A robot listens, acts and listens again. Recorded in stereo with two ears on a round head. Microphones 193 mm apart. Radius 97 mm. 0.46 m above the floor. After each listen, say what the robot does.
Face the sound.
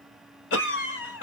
Turn 60° left.
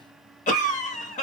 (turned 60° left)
Turn 40° left.
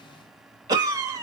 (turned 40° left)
Turn 20° right.
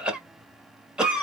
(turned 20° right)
Facing the cough, 1 to 2 m away.